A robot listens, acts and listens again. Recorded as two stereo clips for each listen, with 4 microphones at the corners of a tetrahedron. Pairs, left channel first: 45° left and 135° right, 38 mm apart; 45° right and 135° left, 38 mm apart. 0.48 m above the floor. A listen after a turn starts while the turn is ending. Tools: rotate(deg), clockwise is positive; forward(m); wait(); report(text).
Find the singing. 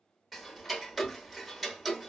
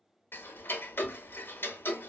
wait()
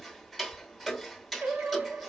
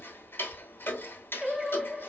rotate(140)
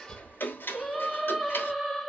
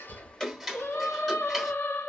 rotate(45)
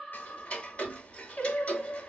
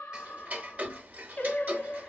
report("Facing the singing, under 1 m away.")